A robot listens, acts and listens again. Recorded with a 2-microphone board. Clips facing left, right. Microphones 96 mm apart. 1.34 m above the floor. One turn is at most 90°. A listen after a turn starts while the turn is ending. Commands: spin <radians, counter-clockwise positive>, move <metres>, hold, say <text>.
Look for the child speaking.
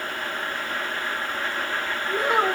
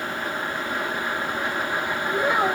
spin 1.13
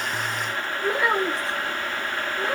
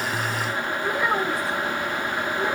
spin 0.26
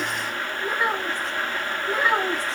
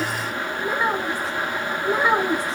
spin -0.52
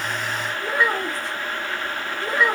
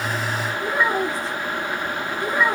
say Facing the child speaking.